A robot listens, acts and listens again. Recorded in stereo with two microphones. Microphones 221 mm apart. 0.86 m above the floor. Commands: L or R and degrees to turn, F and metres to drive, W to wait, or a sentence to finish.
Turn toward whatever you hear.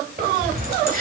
R40
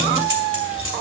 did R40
R115
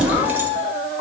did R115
W
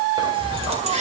R30
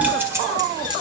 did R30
R20
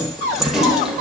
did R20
Found it: keys jangling, straight ahead, 2 to 4 m away.